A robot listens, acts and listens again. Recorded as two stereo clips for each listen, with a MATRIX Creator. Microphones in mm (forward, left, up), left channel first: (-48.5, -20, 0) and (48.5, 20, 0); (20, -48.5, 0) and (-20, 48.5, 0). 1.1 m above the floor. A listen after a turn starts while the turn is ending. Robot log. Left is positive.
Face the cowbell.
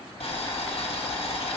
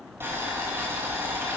cmd idle
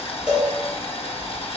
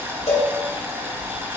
note: The cowbell: 60° right.
cmd yaw -60
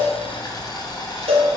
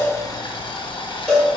note: The cowbell is now 15° left.
cmd yaw +15
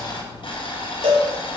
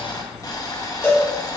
end: Facing the cowbell, 2 to 4 m away.